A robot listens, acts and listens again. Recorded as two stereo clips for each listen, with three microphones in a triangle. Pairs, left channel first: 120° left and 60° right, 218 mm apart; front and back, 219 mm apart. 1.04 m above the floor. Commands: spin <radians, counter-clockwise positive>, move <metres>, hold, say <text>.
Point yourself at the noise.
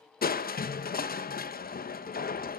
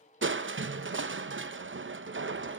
spin 2.79
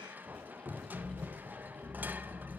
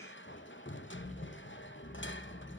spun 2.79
spin 0.44
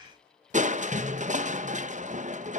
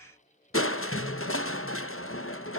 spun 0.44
say Facing the crushing.